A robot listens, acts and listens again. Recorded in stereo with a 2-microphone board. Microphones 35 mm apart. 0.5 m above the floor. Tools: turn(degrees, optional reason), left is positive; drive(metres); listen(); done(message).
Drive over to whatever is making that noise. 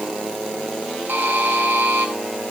turn(degrees=-90)
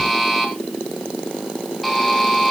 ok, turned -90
drive(metres=1.0)
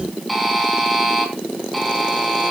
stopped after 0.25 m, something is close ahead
done("Something is in my way. I am facing the buzzer but have not reached it.")